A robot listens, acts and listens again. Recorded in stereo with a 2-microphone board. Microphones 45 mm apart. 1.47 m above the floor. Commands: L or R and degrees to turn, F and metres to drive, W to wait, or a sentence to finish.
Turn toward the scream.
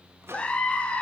L25
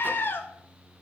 L130
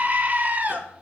R35
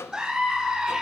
R15
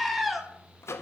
Facing the scream.